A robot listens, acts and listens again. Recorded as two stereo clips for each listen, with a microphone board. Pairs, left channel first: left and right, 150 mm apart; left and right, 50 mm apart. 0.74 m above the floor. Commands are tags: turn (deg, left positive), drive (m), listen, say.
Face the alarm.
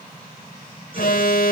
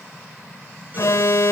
<turn deg="90"/>
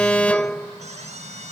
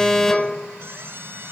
<turn deg="10"/>
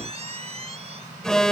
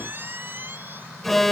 <say>Found it: an alarm, straight ahead.</say>